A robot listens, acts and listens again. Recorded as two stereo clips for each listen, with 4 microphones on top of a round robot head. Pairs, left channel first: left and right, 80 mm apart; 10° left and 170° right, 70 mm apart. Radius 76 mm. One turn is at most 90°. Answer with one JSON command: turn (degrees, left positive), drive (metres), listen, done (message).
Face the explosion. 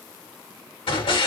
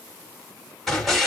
{"turn": 90}
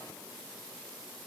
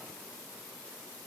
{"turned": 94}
{"done": "I heard an explosion from this way, but can't make it out now."}